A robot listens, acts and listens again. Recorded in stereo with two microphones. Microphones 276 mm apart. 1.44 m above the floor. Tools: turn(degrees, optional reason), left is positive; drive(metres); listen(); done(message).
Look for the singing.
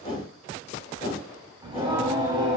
turn(degrees=-15, reason="The singing: about 15° right or 165° right.")
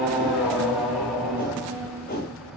done("Facing the singing.")